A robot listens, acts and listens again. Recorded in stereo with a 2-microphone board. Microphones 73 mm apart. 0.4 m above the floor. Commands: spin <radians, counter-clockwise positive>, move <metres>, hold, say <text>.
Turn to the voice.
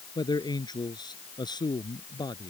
spin 1.57
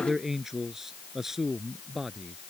say Facing the man speaking.